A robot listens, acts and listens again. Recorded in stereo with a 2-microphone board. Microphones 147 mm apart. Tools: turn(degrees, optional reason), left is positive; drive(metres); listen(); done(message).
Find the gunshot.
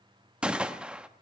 turn(degrees=-30)
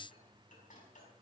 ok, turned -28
listen()
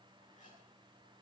done("I heard a gunshot, but can't make it out now. It was about 20° left or 145° right.")